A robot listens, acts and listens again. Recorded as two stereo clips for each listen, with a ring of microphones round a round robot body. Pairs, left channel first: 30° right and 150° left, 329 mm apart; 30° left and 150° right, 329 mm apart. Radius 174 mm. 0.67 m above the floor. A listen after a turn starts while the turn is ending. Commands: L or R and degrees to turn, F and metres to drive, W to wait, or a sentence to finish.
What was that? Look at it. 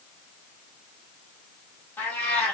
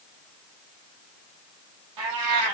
R115
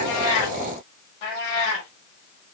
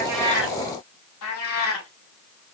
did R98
R20
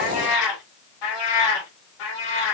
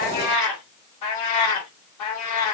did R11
R15
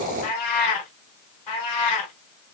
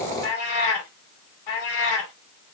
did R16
Facing the cat meowing.